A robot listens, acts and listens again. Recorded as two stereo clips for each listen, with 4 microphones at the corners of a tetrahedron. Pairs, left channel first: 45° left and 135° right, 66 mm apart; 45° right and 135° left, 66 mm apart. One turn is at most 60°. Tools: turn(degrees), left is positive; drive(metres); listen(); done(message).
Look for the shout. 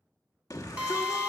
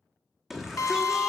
turn(degrees=50)
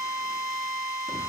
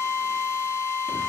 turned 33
turn(degrees=15)
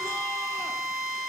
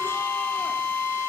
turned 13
listen()
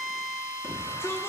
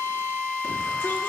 done("I heard a shout from this way, but can't make it out now.")